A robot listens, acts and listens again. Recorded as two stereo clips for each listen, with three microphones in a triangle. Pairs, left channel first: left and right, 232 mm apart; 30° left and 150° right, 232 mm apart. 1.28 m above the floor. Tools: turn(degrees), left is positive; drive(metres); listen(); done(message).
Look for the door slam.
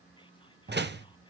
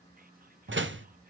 turn(degrees=-125)
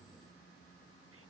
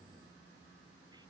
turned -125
done("I heard a door slam from this way, but can't make it out now.")